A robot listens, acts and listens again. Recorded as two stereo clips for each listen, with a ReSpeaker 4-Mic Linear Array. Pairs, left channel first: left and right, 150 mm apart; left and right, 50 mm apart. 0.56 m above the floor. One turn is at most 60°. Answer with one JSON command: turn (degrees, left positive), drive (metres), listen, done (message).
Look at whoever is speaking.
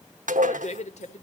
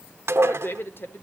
{"turn": 55}
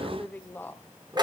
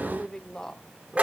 {"turn": 15}
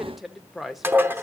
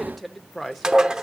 {"done": "Found it: a woman speaking, straight ahead."}